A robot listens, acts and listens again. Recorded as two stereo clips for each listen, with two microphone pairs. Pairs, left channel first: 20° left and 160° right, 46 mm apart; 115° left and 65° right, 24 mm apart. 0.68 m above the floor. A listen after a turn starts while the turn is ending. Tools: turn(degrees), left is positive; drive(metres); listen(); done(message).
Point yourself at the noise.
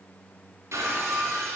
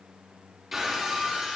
turn(degrees=-145)
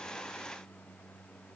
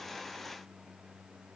done("I heard breaking glass from this way, but can't make it out now.")